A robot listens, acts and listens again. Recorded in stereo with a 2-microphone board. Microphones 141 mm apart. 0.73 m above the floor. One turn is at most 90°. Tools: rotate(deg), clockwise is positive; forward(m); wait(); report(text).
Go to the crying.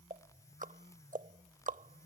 wait()
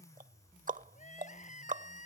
rotate(-65)
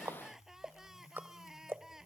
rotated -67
forward(1.0)
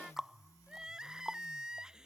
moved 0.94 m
forward(1.0)
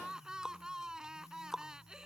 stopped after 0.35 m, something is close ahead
report("Arrived at the crying, straight ahead.")